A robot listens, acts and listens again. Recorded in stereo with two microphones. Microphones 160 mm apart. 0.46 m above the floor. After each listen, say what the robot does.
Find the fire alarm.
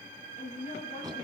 Keep listening.
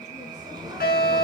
Turn 90° left.
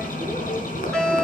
Facing the fire alarm, over 4 m away.